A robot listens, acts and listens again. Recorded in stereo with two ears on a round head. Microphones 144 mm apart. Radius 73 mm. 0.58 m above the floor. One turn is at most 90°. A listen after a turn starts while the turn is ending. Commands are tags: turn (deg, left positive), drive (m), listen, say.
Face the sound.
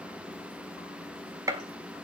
<turn deg="-20"/>
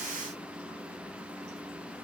<listen/>
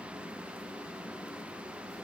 <say>I heard a gunshot, but can't make it out now. It was about straight ahead or 140° right.</say>